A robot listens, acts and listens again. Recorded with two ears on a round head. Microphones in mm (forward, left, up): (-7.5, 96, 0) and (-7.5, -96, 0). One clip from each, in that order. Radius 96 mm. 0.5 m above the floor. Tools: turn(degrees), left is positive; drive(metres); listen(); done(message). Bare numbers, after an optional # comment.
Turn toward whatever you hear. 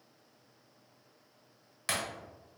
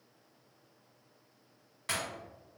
# The breaking glass: about 40° left or 140° left.
turn(40)
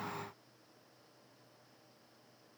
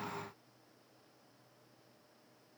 listen()
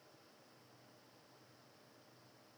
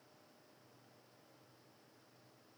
done("I heard breaking glass, but can't make it out now. It was about straight ahead or 100° left.")